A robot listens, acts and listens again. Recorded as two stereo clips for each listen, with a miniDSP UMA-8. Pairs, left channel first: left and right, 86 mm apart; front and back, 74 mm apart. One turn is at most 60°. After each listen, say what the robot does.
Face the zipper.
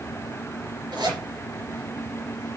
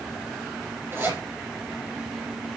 Turn 60° right.
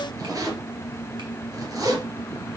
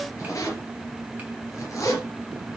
Turn 45° right.
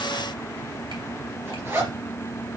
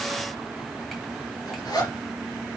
Turn 30° right.
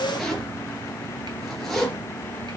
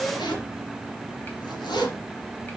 Facing the zipper, 2 to 4 m away.